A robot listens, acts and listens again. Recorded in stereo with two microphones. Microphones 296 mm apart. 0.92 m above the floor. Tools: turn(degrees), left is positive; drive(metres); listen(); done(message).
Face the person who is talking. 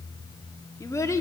turn(degrees=30)
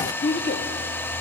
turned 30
turn(degrees=140)
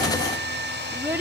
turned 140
turn(degrees=-10)
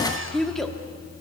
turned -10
done("Facing the child speaking, 1 to 2 m away.")